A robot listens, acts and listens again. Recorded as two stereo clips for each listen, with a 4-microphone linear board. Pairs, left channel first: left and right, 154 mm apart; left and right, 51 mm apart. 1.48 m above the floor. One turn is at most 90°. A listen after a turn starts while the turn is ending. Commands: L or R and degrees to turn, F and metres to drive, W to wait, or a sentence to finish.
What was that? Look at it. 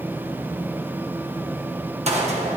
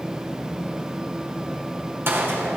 R45
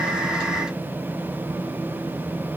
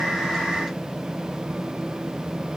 W
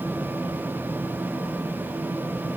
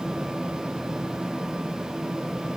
I heard a gunshot, but can't make it out now. It was about straight ahead or 90° right.